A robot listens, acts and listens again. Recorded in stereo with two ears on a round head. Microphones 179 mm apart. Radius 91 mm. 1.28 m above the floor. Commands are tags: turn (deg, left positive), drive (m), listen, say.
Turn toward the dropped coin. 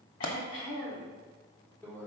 <turn deg="45"/>
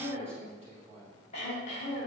<listen/>
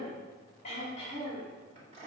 <say>I heard a dropped coin, but can't make it out now. It was about straight ahead or 90° left.</say>